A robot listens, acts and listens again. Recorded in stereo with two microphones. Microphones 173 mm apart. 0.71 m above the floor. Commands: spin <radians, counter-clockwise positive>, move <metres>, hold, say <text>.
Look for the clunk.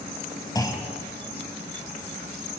spin 0.35
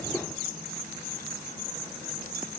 hold
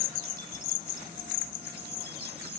say I heard a clunk, but can't make it out now. It was about straight ahead or 140° left.